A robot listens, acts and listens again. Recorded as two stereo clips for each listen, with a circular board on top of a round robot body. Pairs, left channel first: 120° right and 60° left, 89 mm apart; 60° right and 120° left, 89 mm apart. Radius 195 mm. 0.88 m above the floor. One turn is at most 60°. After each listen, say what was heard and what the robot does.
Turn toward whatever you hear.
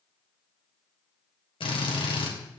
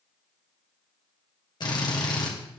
The drill: 100° right. Turn 60° right.
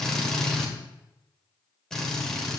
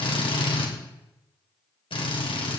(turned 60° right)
The drill is now 35° right. Turn 35° right.
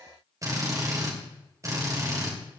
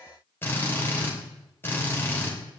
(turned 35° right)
Facing the drill.